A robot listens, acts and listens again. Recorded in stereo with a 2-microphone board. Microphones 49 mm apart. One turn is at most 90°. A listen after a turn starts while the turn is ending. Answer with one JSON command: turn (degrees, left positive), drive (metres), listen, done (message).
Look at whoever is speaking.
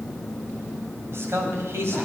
{"turn": -65}
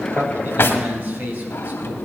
{"turn": -45}
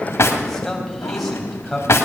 {"done": "Found it: a man speaking, straight ahead, 2 to 4 m away."}